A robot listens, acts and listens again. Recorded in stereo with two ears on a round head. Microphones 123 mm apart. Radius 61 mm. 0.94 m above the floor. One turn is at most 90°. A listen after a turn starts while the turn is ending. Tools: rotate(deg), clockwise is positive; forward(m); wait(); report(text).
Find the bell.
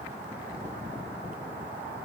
wait()
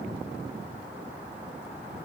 wait()
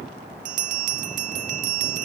rotate(60)
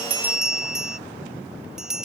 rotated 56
report("Facing the bell.")